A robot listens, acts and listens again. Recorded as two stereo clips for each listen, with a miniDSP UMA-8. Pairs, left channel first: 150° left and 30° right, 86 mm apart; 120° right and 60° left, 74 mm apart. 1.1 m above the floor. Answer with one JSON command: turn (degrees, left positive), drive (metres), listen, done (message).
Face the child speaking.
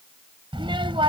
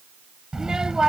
{"turn": -20}
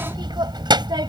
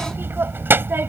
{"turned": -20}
{"done": "Found it: a child speaking, straight ahead."}